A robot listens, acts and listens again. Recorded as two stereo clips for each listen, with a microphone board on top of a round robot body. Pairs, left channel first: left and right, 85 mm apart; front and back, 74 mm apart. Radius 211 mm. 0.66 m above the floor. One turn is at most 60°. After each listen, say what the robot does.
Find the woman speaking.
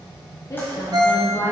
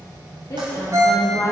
Turn 35° left.
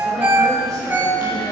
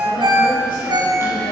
Keep listening.
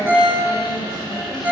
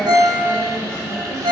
Keep listening.
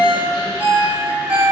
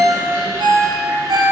I heard a woman speaking from this way, but can't make it out now.